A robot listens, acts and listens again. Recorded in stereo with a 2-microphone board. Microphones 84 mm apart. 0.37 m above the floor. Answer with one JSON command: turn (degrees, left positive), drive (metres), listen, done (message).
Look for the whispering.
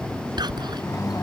{"turn": -60}
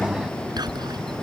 {"turn": -60}
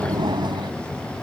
{"listen": true}
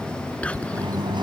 {"turn": 15}
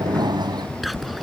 {"done": "Found it: whispering, straight ahead."}